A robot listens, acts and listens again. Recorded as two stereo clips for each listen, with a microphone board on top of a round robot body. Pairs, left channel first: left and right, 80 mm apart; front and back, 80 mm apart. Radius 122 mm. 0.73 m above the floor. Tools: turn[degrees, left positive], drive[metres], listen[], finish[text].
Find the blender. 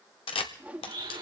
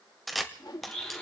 Thought: The blender: 80° right.
Action: turn[-80]
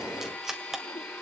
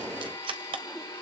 Thought: The blender is now 15° left.
Action: turn[15]
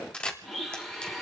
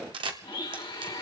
Action: finish[Found it: a blender, straight ahead, 2 to 4 m away.]